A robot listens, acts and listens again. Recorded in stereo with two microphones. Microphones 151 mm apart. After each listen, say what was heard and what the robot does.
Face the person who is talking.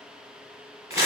Keep listening.
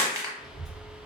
Turn 30° right.
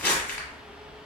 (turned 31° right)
So it is at 145° right. Turn 145° right.
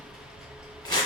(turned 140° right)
Found it: a child speaking, straight ahead.